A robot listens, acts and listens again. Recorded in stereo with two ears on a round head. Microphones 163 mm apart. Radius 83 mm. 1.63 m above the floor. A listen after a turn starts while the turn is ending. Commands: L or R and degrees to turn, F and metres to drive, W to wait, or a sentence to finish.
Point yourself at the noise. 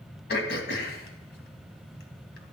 L60
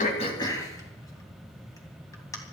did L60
L20
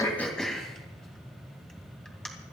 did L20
Found it: throat clearing, straight ahead, 2 to 4 m away.